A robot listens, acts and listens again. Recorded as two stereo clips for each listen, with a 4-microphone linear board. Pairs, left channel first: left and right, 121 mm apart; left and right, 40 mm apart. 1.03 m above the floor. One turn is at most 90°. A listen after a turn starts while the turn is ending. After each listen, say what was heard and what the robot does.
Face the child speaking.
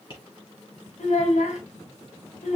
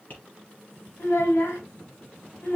The child speaking: about 75° left or 105° left. Turn 75° left.
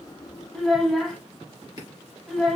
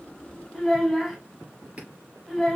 Found it: a child speaking, straight ahead, 2 to 4 m away.